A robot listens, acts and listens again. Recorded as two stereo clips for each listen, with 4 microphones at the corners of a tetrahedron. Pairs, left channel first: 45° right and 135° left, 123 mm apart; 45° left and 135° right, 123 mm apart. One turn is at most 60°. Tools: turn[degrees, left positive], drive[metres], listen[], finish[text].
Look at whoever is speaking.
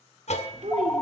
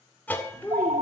Thought: The child speaking: 120° left.
Action: turn[60]
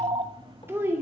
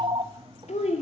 Thought: The child speaking is now 65° left.
Action: turn[60]
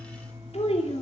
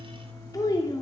Thought: The child speaking is now 15° right.
Action: turn[-15]
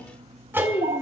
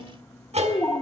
Action: finish[Found it: a child speaking, straight ahead.]